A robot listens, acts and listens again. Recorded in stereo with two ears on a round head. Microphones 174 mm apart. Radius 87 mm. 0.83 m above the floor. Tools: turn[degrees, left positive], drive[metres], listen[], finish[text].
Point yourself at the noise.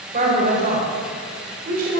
Thought: The woman speaking: about 50° right or 130° right.
Action: turn[-50]
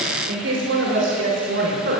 Thought: So it is at 60° right.
Action: turn[-60]
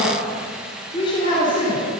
Thought: The woman speaking is now 30° left.
Action: turn[30]
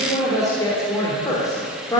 Thought: The woman speaking is now 20° left.
Action: turn[20]
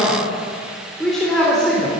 Action: finish[Found it: a woman speaking, straight ahead.]